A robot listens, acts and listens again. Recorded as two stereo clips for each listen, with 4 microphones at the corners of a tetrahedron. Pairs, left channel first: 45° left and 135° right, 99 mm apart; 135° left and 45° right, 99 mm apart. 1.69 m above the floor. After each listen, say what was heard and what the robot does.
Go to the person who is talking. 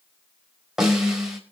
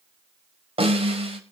Keep listening.
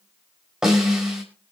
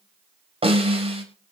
Keep listening.
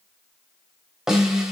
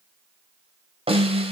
I can't make out anyone speaking to turn to.